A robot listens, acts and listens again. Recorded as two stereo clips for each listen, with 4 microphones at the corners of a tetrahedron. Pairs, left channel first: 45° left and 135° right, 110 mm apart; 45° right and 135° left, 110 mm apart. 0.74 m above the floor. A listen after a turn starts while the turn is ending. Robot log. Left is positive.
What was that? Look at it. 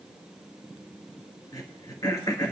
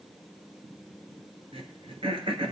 note: The throat clearing: 100° left.
cmd yaw +100
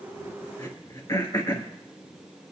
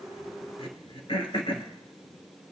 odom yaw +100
note: The throat clearing is now 10° right.
cmd yaw -10
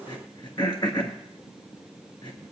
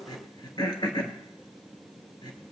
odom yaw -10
end: Found it: throat clearing, straight ahead, 1 to 2 m away.